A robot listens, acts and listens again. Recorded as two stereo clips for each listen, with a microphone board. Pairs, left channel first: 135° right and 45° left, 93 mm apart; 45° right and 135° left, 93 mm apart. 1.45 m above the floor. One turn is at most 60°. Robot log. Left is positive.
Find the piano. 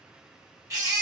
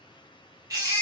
cmd idle
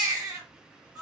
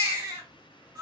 cmd idle
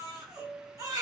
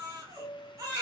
end: Found it: a piano, straight ahead, 1 to 2 m away.